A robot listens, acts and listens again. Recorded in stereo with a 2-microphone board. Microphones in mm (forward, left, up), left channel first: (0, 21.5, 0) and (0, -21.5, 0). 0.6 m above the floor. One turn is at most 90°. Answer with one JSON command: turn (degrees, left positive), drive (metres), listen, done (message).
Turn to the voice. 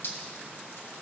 {"listen": true}
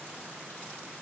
{"listen": true}
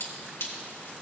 {"done": "I can't make out anyone speaking, only dripping."}